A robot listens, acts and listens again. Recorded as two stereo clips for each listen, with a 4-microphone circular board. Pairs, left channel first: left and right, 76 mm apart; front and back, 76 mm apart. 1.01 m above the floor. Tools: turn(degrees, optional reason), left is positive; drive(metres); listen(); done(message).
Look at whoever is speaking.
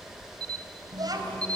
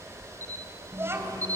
turn(degrees=-120, reason="The child speaking: 120° right.")
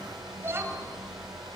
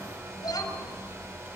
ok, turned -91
turn(degrees=-30, reason="The child speaking is now 30° right.")
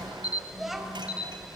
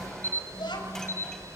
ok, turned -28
done("Facing the child speaking, 2 to 4 m away.")